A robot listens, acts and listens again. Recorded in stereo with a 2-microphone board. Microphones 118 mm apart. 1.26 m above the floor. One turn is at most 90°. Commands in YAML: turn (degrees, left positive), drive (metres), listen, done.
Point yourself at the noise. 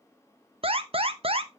turn: -50
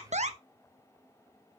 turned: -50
turn: -75
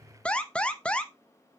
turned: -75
turn: 10
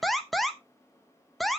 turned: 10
done: "Found it: an alarm, straight ahead."